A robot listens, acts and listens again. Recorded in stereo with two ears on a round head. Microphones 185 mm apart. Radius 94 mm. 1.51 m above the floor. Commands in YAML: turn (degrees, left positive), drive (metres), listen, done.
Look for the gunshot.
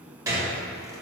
turn: -30
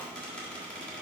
listen: true
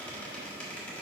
done: "I heard a gunshot, but can't make it out now. It was about 15° left or 135° right."